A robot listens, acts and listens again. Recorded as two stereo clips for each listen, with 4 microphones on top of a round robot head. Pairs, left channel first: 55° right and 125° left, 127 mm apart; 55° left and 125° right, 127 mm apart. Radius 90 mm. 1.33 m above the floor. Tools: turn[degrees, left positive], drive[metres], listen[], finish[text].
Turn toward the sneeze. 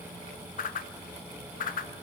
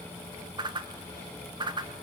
Action: listen[]
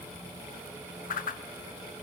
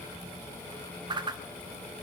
Action: listen[]
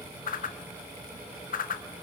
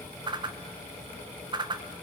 Action: finish[I can't make out a sneeze to turn to.]